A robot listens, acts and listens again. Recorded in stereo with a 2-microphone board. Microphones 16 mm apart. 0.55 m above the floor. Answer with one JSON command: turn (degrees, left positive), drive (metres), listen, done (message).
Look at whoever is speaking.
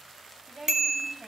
{"turn": -50}
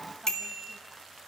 {"listen": true}
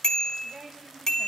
{"turn": -80}
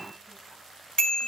{"listen": true}
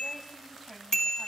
{"listen": true}
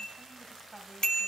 {"turn": 25}
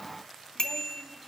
{"listen": true}
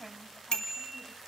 {"done": "Facing the woman speaking."}